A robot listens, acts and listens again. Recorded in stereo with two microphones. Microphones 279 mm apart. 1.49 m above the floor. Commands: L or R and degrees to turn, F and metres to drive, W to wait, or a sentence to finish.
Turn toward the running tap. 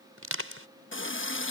L45
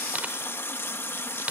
L10
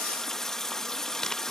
Found it: a running tap, straight ahead.